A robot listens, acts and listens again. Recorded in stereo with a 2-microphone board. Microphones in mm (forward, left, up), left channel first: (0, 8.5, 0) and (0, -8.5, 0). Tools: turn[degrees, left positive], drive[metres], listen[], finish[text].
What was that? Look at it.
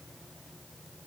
Action: listen[]
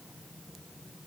Action: listen[]
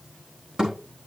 Thought: The thud: about 45° right or 135° right.
Action: turn[-45]
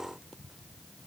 Action: listen[]
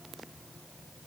Action: finish[I heard a thud, but can't make it out now. It was about straight ahead or 90° right.]